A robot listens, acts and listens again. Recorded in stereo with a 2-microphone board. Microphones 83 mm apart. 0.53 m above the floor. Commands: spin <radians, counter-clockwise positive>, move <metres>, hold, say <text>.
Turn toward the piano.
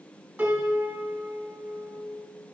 spin -0.35
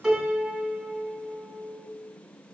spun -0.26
say Found it: a piano, straight ahead.